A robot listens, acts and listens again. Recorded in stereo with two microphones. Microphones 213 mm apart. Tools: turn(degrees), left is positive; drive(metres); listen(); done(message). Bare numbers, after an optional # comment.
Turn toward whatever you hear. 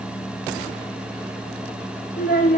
# The child speaking: about 45° left or 135° left.
turn(45)
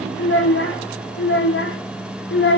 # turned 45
# So it is at 65° left.
turn(65)
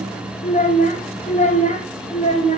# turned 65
# The child speaking is now 35° left.
turn(35)
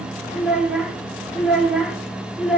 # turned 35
done("Facing the child speaking.")